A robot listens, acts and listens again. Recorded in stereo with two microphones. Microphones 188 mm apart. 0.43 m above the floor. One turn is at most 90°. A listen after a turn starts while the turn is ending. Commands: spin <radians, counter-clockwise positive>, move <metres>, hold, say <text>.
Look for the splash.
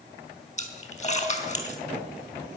spin 0.70
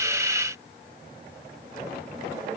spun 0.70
hold
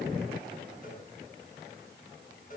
say I heard a splash, but can't make it out now. It was about straight ahead or 100° left.